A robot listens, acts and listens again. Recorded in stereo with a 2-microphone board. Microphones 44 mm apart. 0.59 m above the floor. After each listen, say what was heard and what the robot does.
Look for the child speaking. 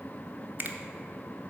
Keep listening.
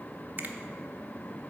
Keep listening.
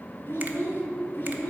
The child speaking: about 45° left or 135° left. Turn 45° left.
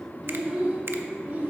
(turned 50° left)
So it is at 30° right. Turn 30° right.
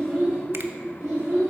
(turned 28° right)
The child speaking is now 15° right. Turn 15° right.
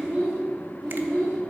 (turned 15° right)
Found it: a child speaking, straight ahead, 1 to 2 m away.